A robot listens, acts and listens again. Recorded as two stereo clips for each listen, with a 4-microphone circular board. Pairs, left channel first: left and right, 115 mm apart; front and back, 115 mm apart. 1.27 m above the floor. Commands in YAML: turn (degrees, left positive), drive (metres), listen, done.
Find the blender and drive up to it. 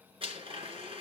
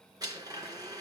turn: -125
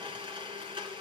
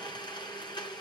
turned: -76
turn: -45
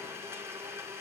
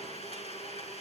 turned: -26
turn: -20
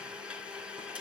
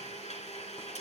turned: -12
turn: -10
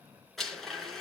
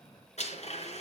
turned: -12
drive: 1.0
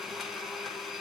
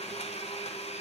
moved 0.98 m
drive: 1.0
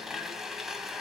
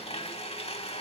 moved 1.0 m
drive: 1.0
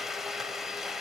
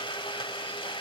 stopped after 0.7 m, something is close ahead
done: "I am next to the blender."